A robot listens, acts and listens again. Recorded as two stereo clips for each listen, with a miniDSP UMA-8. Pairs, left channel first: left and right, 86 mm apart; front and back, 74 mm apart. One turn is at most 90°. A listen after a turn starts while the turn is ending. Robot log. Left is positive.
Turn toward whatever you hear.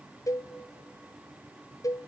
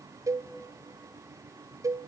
note: The cowbell: 140° left.
cmd yaw +90
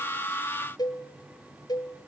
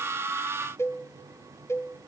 note: The cowbell is now 50° left.
cmd yaw +50
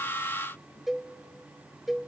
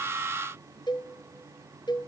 end: Facing the cowbell, under 1 m away.